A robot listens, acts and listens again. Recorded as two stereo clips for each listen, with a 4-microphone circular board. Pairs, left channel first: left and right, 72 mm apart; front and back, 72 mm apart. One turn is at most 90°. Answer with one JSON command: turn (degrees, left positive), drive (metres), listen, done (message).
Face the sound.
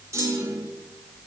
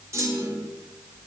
{"turn": -90}
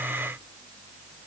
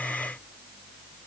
{"turn": -45}
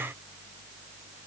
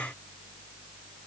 {"done": "Facing where the clunk came from. I can't hear it now."}